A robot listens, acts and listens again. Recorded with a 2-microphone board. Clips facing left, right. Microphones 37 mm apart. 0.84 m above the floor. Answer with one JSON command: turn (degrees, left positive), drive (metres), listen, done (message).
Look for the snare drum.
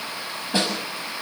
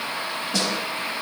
{"turn": 30}
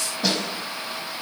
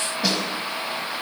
{"done": "Found it: a snare drum, straight ahead."}